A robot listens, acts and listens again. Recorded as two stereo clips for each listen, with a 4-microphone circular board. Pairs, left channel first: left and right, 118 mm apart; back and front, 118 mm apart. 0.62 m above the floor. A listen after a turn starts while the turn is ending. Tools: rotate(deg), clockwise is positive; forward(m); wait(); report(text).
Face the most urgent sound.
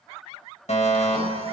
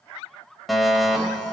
rotate(-90)
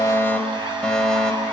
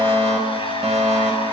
report("Found it: a fire alarm, straight ahead, over 4 m away.")